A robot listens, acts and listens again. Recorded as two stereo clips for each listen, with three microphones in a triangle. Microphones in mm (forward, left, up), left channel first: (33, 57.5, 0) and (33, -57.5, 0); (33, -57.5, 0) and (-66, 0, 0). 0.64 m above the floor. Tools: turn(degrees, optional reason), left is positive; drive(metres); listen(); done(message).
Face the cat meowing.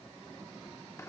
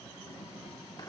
listen()
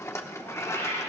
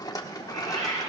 turn(degrees=155, reason="The cat meowing: 155° left.")
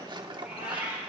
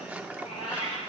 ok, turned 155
turn(degrees=-15, reason="The cat meowing is now 15° right.")
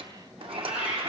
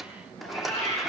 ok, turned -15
turn(degrees=-10, reason="The cat meowing is now 10° right.")
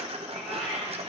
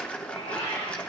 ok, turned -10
done("Found it: a cat meowing, straight ahead, over 4 m away.")